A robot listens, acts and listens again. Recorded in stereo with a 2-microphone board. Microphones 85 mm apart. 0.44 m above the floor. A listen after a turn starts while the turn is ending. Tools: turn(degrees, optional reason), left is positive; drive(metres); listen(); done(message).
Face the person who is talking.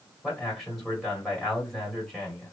turn(degrees=30)
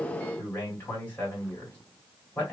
turn(degrees=150, reason="So it is at 150° left.")
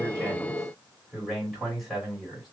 done("Found it: a man speaking, straight ahead, 1 to 2 m away.")